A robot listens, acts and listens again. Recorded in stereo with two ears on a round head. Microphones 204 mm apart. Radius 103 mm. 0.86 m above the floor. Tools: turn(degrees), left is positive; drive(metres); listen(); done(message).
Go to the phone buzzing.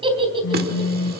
turn(degrees=65)
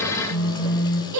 turn(degrees=50)
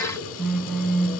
drive(metres=1.0)
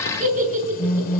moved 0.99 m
drive(metres=1.0)
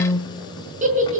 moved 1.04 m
turn(degrees=15)
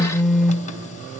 drive(metres=1.0)
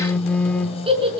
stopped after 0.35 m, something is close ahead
done("Arrived at the phone buzzing, straight ahead.")